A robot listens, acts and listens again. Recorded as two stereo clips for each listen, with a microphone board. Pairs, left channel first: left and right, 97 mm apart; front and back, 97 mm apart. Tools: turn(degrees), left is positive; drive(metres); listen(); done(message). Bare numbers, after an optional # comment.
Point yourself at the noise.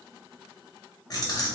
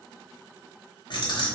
# The keys jangling: 40° left.
turn(40)
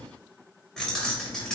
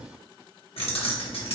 done("Facing the keys jangling, 1 to 2 m away.")